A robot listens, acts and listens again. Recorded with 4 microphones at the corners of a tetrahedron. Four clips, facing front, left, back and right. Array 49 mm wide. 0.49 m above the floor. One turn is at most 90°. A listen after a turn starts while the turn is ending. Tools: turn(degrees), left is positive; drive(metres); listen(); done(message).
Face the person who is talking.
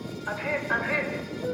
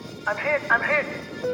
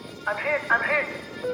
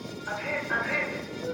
turn(degrees=90)
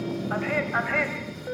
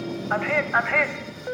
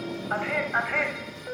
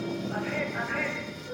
turn(degrees=85)
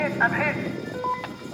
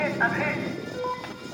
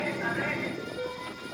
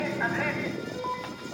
turn(degrees=10)
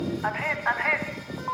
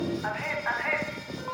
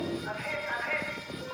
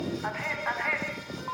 done("Found it: a man speaking, straight ahead, over 4 m away.")